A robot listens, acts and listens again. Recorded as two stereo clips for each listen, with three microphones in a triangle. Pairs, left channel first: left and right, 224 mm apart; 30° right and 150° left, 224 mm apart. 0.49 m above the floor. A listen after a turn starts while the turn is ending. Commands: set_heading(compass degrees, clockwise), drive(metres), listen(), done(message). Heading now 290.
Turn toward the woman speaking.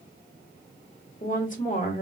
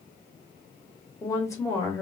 set_heading(250)
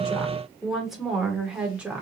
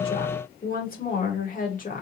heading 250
set_heading(260)
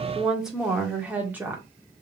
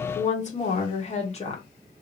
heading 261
set_heading(281)
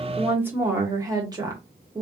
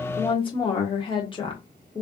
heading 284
set_heading(334)
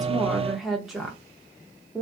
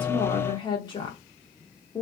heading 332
done("Found it: a woman speaking, straight ahead, 1 to 2 m away.")